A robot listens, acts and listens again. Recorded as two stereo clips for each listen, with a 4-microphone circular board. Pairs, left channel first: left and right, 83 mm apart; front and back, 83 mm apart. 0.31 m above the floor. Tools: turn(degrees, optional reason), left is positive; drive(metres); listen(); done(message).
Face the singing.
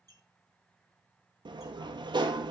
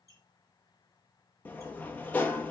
listen()
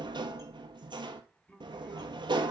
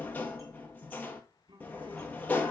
turn(degrees=165, reason="The singing: 165° left.")
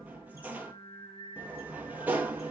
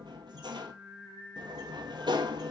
turn(degrees=100, reason="The singing is now 100° left.")
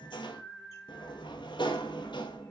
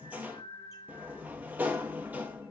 turn(degrees=15, reason="The singing is now 15° left.")
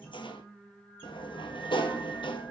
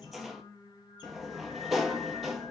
done("Found it: singing, straight ahead, 2 to 4 m away.")